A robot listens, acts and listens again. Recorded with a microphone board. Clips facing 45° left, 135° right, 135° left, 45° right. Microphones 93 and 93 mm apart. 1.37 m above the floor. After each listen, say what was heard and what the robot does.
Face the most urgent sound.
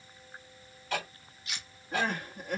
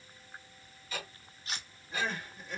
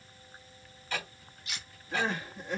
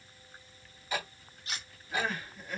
The crying: 70° left. Turn 70° left.
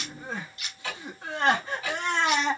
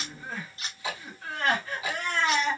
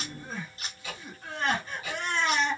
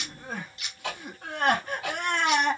The crying is now 20° right. Turn 20° right.
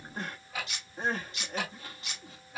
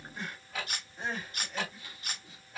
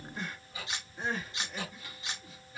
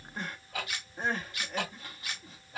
Facing the crying, 1 to 2 m away.